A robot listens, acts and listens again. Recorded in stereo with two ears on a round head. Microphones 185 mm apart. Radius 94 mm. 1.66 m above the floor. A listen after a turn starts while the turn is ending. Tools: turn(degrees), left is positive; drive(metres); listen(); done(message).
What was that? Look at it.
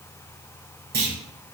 turn(degrees=-50)
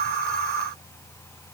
listen()
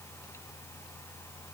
done("I heard a clunk, but can't make it out now. It was about straight ahead or 80° right.")